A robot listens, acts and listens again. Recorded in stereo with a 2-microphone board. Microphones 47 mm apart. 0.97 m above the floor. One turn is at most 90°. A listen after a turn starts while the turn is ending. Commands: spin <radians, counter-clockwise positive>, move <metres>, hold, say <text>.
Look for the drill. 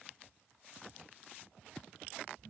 hold
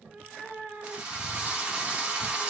spin -0.35
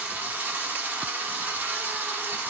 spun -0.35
spin -1.57
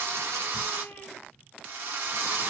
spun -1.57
spin -1.31
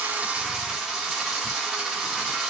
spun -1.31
spin -0.35
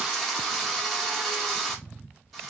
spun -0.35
say Found it: a drill, straight ahead.